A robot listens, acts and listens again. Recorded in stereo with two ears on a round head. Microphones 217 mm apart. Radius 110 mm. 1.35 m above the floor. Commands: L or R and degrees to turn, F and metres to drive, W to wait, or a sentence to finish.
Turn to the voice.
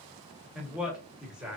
R30
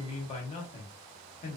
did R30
L25
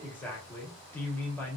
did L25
Found it: a man speaking, straight ahead, 1 to 2 m away.